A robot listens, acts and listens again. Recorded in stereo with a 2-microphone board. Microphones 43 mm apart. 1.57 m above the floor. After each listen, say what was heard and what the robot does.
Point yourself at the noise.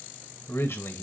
Turn 90° left.
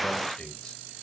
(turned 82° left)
Nothing new. It was at 10° left. Turn 10° left.
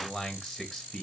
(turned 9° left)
Found it: a man speaking, straight ahead, 2 to 4 m away.